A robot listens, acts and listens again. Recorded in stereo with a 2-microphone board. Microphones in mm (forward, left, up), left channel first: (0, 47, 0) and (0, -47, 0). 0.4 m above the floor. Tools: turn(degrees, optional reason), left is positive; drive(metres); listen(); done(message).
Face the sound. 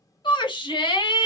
turn(degrees=55, reason="The shout: about 55° left or 125° left.")
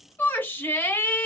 turn(degrees=25, reason="So it is at 25° left.")
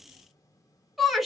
done("Found it: a shout, straight ahead.")